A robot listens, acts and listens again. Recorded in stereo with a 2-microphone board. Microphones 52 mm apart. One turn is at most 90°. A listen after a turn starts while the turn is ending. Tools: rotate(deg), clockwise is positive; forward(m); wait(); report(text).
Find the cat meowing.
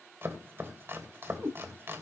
rotate(90)
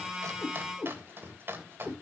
report("Found it: a cat meowing, straight ahead.")